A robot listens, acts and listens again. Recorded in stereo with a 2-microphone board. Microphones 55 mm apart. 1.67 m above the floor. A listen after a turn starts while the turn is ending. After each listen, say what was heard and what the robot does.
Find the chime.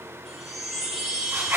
Turn 30° left.
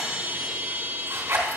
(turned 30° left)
So it is at 30° right. Turn 30° right.
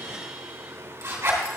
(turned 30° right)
Keep listening.
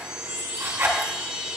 The chime is now 15° right. Turn 15° right.
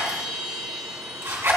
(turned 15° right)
Facing the chime.